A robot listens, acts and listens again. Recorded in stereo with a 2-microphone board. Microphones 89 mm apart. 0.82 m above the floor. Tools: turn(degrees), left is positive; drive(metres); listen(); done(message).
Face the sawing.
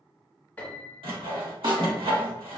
turn(degrees=-90)
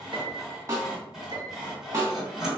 done("Found it: sawing, straight ahead.")